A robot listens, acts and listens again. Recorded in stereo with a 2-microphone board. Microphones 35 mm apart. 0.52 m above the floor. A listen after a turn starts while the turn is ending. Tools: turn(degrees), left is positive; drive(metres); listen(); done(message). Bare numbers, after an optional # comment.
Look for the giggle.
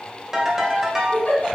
# The giggle: about 55° left or 125° left.
turn(55)
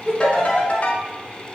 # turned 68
listen()
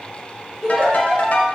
# So it is at 10° left.
turn(10)
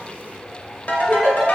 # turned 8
done("Found it: a giggle, straight ahead.")